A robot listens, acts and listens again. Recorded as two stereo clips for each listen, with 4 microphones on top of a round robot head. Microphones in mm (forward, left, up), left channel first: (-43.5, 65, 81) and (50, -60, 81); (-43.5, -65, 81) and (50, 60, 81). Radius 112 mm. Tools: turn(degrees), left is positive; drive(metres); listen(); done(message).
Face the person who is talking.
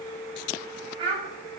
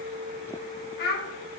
turn(degrees=-115)
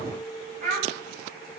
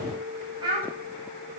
turn(degrees=-10)
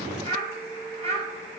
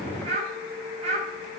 done("Found it: a child speaking, straight ahead.")